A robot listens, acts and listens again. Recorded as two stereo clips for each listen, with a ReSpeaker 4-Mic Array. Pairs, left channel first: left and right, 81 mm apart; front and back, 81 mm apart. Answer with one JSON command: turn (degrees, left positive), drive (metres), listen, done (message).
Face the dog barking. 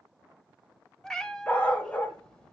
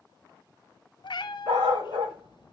{"turn": 160}
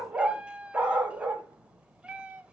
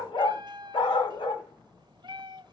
{"turn": -15}
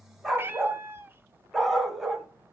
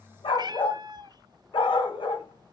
{"done": "Facing the dog barking."}